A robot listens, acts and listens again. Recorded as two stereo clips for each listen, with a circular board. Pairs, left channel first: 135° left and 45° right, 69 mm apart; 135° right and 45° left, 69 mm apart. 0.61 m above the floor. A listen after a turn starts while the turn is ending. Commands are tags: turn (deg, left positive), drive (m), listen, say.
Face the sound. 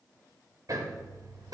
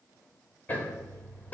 <turn deg="-70"/>
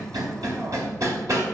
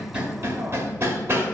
<turn deg="-10"/>
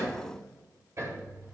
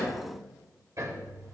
<say>Found it: hammering, straight ahead.</say>